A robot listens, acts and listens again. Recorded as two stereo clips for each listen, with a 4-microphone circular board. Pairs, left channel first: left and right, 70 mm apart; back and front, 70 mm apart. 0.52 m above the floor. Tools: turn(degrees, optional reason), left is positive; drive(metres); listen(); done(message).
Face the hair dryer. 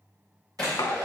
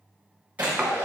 turn(degrees=-70, reason="The hair dryer: 70° right.")
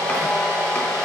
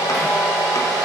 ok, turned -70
turn(degrees=10, reason="The hair dryer is now 10° left.")
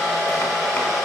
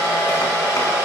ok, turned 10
done("Facing the hair dryer.")